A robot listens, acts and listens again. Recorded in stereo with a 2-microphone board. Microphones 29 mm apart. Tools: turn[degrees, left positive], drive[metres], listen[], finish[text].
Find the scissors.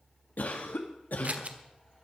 Thought: The scissors: about 55° right or 125° right.
Action: turn[-55]
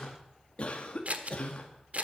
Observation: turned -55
Thought: So it is at 70° right.
Action: turn[-70]
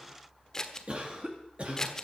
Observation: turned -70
Thought: The scissors is now 15° left.
Action: turn[15]
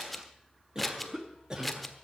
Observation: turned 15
Action: finish[Facing the scissors.]